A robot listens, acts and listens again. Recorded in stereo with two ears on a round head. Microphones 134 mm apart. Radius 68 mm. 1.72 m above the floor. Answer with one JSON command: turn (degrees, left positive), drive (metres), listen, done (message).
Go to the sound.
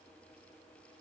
{"listen": true}
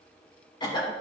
{"turn": 30}
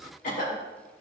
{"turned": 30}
{"turn": 120}
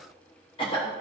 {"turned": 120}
{"turn": 35}
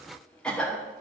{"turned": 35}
{"drive": 1.0}
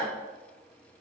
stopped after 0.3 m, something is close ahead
{"turn": 10}
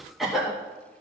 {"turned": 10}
{"done": "Blocked. The cough is further on, straight ahead."}